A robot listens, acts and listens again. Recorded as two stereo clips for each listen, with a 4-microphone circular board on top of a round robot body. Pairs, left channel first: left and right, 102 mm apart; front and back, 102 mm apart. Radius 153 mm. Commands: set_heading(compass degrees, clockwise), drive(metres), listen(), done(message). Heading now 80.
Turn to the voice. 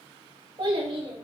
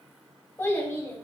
set_heading(145)
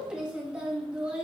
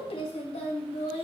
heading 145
set_heading(155)
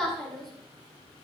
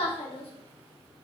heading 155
done("Found it: a child speaking, straight ahead.")